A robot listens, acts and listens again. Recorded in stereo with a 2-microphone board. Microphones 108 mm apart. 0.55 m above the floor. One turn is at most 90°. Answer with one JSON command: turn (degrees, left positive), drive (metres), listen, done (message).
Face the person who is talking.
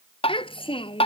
{"turn": 55}
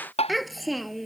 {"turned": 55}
{"done": "Facing the child speaking."}